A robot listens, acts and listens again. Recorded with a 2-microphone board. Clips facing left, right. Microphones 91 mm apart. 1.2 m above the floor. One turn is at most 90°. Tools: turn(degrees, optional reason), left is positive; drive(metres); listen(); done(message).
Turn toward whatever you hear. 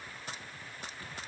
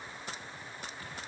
listen()
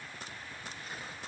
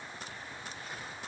listen()
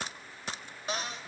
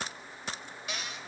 turn(degrees=35, reason="The cupboard door: about 35° left or 145° left.")
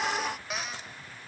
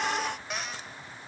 done("Facing the cupboard door, 1 to 2 m away.")